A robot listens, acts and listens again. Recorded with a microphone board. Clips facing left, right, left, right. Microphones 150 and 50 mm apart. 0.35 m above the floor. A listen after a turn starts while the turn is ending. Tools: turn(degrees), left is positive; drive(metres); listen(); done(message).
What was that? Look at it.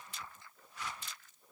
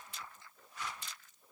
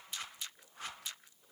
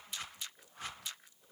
listen()
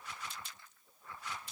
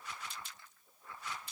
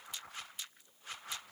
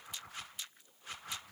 listen()
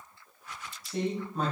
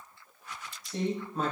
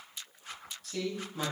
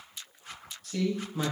turn(degrees=-30)
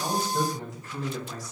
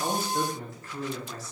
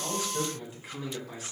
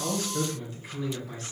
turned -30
turn(degrees=15)
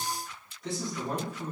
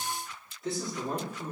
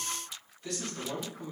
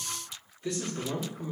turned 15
done("Found it: a man speaking, straight ahead, 2 to 4 m away.")